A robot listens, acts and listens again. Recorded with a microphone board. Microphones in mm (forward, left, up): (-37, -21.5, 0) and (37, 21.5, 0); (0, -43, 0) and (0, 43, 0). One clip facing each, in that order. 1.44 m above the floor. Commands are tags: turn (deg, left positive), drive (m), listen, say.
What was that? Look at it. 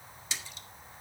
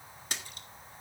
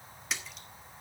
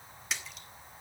<say>Facing the splash.</say>